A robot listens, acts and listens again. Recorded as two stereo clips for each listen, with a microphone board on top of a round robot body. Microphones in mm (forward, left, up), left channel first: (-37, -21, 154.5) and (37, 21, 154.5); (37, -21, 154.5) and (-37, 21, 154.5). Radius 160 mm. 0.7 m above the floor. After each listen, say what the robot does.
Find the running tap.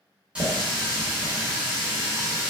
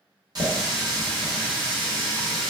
Turn 105° left.
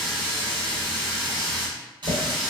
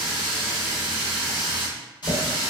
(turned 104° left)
Facing the running tap, 1 to 2 m away.